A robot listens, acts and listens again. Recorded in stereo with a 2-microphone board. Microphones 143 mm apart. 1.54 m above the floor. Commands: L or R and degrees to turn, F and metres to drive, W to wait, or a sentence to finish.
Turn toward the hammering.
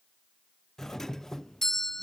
W
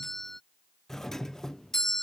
W
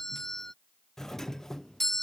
I can't make out hammering, only a doorbell.